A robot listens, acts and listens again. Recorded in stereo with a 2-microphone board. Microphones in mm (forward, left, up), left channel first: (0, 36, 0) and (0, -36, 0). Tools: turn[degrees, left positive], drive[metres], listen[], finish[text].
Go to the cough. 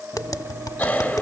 Thought: The cough: about 20° left or 160° left.
Action: turn[20]
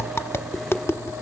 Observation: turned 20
Action: listen[]
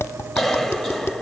Action: drive[1.0]
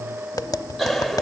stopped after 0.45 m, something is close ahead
Action: finish[Something is in my way. I am facing the cough but have not reached it.]